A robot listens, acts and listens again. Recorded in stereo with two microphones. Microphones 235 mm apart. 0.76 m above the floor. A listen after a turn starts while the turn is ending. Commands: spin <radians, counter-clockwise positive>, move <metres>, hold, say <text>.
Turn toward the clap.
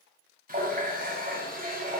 hold
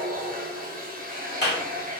spin 0.79
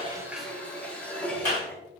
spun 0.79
spin 1.40
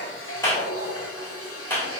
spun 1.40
spin 0.17
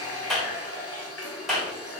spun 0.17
say Facing the clap.